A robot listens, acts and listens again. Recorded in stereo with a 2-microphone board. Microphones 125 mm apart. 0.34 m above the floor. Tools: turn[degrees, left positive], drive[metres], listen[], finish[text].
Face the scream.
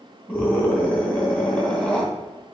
Action: turn[30]
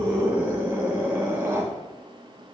Thought: So it is at 20° right.
Action: turn[-20]
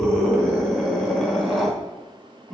Action: finish[Facing the scream.]